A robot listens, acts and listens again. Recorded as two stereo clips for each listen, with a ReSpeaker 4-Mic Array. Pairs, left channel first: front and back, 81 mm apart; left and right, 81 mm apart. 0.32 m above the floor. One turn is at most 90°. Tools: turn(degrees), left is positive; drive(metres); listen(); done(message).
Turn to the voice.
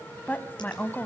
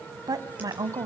turn(degrees=-65)
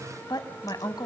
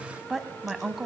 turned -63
done("Facing the woman speaking.")